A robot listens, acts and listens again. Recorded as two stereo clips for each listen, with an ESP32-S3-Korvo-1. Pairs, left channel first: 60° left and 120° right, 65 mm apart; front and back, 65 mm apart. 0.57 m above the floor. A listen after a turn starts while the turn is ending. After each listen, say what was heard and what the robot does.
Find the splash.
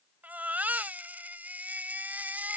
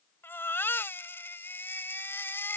Keep listening.
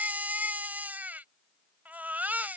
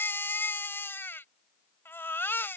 Keep listening.
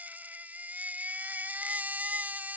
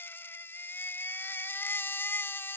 I can't make out a splash, only a baby crying.